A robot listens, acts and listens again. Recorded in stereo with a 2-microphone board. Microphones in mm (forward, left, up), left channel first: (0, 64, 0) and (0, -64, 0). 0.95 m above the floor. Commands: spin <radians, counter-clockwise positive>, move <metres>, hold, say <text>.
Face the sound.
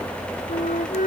spin 1.57
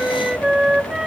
say Found it: a flute, straight ahead.